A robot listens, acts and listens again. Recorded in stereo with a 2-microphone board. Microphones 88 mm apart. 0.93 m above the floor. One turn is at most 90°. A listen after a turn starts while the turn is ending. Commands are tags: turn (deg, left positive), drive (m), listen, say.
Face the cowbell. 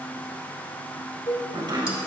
<turn deg="70"/>
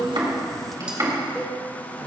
<listen/>
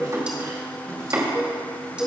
<say>Found it: a cowbell, straight ahead.</say>